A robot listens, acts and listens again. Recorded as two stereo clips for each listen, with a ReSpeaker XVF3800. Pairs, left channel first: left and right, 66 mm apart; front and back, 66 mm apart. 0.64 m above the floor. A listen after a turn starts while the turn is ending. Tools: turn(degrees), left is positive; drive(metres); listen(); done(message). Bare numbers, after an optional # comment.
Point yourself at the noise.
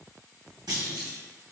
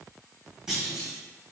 # The clunk: 100° right.
turn(-100)
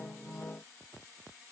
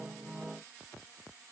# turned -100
done("Facing where the clunk came from. I can't hear it now.")